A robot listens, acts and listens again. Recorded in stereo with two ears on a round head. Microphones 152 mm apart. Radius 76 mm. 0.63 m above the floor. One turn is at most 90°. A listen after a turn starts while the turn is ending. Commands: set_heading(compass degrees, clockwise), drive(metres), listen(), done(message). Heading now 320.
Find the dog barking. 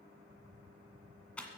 listen()
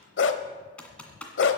set_heading(230)
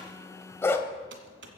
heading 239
set_heading(224)
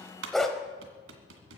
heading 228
done("Found it: a dog barking, straight ahead, 1 to 2 m away.")